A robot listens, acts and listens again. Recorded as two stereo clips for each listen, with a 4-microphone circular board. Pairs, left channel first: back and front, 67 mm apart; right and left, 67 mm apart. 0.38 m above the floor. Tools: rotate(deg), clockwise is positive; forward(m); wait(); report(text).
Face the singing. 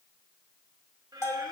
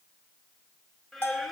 report("Found it: singing, straight ahead, 1 to 2 m away.")